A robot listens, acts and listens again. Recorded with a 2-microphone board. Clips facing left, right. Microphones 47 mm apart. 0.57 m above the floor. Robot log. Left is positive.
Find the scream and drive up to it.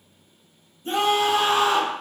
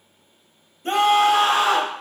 note: The scream: about 65° right or 115° right.
cmd yaw -65
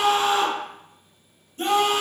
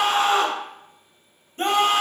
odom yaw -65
note: So it is at 45° right.
cmd yaw -45
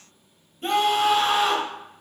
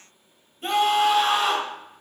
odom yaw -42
cmd fwd 1.0
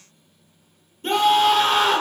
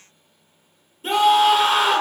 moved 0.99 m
cmd fwd 1.0
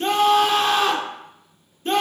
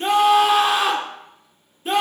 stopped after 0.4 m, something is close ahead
note: The scream is now 10° right.
cmd yaw -10
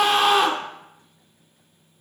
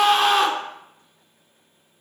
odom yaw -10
end: Arrived at the scream, straight ahead.